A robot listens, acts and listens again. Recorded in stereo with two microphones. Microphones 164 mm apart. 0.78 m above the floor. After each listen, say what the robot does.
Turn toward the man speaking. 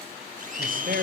Turn 60° right.
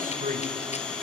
Turn 55° right.
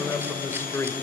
Turn 15° left.
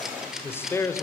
Turn 20° left.
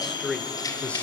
Found it: a man speaking, straight ahead, 2 to 4 m away.